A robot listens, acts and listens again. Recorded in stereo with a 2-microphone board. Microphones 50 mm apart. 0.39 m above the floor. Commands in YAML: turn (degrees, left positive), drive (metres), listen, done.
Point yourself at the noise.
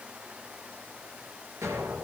turn: -90
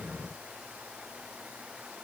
done: "Facing where the explosion came from. I can't hear it now."